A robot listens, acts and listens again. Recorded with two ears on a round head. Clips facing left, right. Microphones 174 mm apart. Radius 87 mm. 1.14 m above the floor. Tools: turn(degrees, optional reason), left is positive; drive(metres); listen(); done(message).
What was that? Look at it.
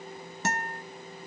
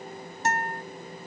turn(degrees=60, reason="The guitar: about 60° left or 120° left.")
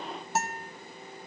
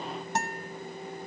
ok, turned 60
done("Facing the guitar, under 1 m away.")